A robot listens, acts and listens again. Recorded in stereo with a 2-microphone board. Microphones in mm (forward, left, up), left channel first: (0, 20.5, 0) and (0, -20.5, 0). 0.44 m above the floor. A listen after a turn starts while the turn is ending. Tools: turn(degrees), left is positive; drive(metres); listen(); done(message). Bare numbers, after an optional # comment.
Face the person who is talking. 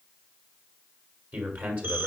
# The man speaking: about 45° right or 135° right.
turn(-45)
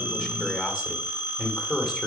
done("Facing the man speaking, 1 to 2 m away.")